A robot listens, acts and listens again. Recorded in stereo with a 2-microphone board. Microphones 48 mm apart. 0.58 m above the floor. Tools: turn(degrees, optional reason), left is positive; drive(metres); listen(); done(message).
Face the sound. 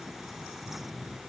listen()
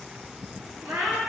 turn(degrees=-90)
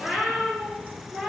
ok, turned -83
turn(degrees=-10, reason="So it is at 10° right.")
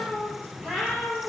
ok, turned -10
done("Facing the cat meowing, over 4 m away.")